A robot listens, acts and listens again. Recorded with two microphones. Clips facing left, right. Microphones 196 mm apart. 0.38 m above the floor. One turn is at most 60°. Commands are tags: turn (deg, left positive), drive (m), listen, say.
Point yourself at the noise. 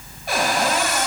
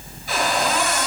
<turn deg="60"/>
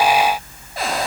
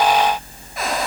<turn deg="35"/>
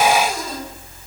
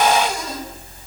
<listen/>
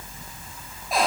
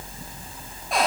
<say>Found it: a cupboard door, straight ahead, 2 to 4 m away.</say>